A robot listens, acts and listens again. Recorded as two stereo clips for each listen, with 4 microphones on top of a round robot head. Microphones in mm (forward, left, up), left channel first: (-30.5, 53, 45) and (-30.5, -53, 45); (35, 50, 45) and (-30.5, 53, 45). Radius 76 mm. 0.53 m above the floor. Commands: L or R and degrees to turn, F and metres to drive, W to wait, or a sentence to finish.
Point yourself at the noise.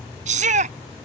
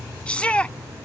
R80
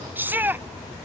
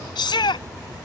R15
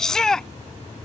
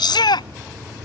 Found it: a shout, straight ahead.